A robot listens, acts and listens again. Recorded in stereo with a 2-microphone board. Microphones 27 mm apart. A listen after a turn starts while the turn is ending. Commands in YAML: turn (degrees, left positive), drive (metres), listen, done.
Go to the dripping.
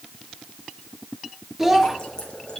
turn: 30
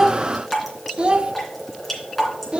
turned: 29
drive: 1.0
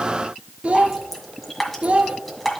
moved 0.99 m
drive: 1.0
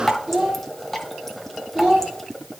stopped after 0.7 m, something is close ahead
done: "Arrived at the dripping, straight ahead."